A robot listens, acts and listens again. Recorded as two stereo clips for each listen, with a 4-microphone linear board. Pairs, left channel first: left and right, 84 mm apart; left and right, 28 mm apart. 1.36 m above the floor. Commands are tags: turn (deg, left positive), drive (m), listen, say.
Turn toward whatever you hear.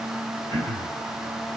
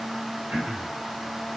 <turn deg="-70"/>
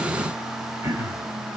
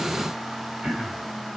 <turn deg="-35"/>
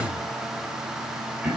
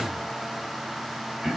<turn deg="-15"/>
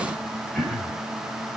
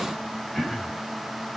<say>Facing the throat clearing.</say>